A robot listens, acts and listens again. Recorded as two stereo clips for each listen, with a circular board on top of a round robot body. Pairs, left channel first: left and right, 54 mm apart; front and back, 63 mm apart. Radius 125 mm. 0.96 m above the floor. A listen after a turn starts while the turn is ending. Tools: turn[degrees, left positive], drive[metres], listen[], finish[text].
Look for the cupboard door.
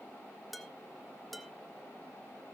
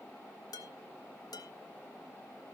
Action: listen[]
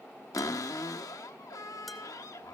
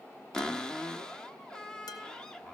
Thought: The cupboard door: 80° left.
Action: turn[80]
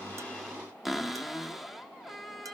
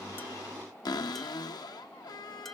Action: finish[Facing the cupboard door, under 1 m away.]